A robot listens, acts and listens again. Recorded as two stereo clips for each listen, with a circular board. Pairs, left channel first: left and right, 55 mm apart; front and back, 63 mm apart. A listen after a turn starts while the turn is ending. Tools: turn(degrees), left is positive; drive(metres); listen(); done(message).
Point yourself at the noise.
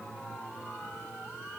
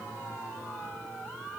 listen()
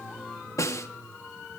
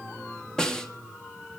turn(degrees=80)
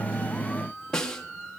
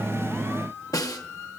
turn(degrees=15)
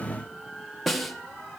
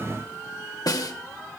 done("Found it: a snare drum, straight ahead.")